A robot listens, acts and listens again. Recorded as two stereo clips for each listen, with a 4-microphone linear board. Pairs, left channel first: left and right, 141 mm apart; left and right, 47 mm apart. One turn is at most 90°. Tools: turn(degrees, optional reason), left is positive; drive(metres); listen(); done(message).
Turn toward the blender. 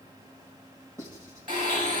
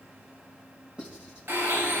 turn(degrees=-70, reason="The blender: about 70° right or 110° right.")
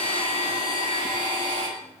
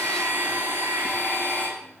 turn(degrees=-40, reason="So it is at 40° right.")
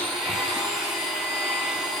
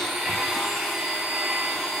done("Facing the blender, over 4 m away.")